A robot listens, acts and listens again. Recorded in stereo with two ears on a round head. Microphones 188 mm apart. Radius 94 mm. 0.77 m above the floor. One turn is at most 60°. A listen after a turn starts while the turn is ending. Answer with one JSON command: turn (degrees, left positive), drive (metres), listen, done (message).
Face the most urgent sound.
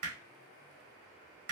{"listen": true}
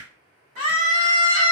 {"turn": 60}
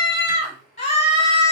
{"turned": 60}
{"turn": 35}
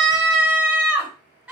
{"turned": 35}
{"done": "Found it: a scream, straight ahead, 1 to 2 m away."}